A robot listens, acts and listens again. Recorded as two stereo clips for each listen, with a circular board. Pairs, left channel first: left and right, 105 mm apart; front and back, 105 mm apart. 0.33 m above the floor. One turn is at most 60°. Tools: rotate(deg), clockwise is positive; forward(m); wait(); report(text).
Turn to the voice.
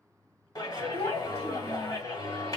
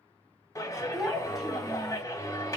rotate(-60)
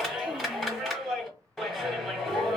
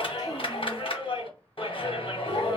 rotate(-30)
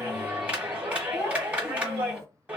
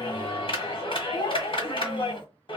rotate(-30)
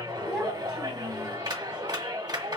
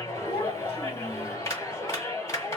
wait()
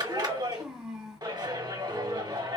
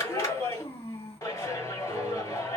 rotate(10)
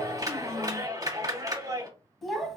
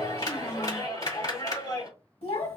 report("Found it: a child speaking, straight ahead.")